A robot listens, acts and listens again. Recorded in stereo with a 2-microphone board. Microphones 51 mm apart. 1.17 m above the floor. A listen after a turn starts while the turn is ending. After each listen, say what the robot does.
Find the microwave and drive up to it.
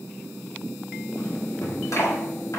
Keep listening.
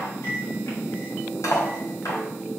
Turn 55° left.
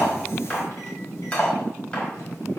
Keep listening.
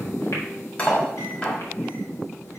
Keep listening.
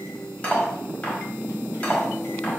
I heard a microwave, but can't make it out now. It was about straight ahead or 70° left. I did not reach it.